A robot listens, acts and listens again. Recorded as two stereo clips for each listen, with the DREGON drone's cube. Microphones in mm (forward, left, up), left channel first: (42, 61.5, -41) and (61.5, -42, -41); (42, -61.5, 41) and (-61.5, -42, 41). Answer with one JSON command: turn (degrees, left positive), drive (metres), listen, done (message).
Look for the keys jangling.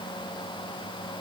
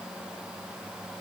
{"listen": true}
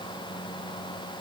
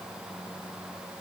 {"listen": true}
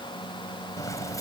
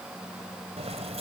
{"turn": 160}
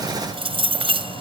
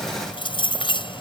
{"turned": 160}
{"turn": -50}
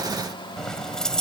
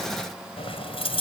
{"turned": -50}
{"turn": 15}
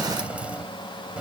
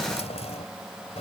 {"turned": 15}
{"done": "Facing the keys jangling."}